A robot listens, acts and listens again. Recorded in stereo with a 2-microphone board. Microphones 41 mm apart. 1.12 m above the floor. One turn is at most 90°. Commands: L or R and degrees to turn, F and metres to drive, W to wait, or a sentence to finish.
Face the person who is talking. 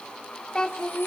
L20
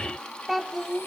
Facing the child speaking, 1 to 2 m away.